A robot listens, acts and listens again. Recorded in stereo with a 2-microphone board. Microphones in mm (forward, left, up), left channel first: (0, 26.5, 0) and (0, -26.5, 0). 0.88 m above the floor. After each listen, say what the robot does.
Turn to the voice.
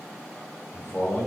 Turn 35° left.
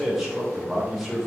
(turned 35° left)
Found it: a man speaking, straight ahead.